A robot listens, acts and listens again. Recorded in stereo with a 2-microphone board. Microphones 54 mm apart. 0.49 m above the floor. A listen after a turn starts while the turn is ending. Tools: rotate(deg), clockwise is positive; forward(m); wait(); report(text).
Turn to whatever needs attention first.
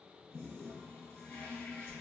wait()
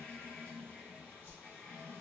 wait()
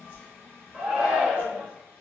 rotate(30)
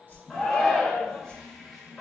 rotate(-15)
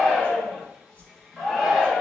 report("Facing the shout.")